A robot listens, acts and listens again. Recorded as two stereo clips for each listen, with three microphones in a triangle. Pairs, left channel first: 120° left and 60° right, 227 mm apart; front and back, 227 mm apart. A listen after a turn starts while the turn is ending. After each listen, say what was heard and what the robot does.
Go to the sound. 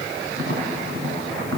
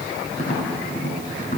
The tapping: 55° right. Turn 55° right.
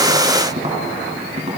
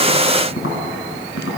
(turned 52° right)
Drive 1.0 m forward.
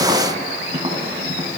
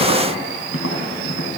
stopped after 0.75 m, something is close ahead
Blocked. The tapping is further on, straight ahead.